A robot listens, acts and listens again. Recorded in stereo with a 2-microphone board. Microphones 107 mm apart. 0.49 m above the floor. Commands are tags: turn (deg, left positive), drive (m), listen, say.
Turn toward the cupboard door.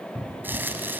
<turn deg="30"/>
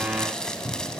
<turn deg="-15"/>
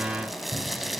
<listen/>
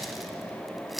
<listen/>
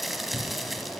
<say>Facing where the cupboard door came from. I can't hear it now.</say>